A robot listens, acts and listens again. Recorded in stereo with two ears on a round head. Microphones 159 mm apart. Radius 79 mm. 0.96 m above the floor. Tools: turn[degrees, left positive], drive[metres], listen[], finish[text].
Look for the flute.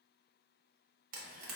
Action: listen[]
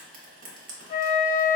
Thought: The flute: about 35° left or 145° left.
Action: turn[35]
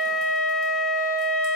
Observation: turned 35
Action: finish[Facing the flute.]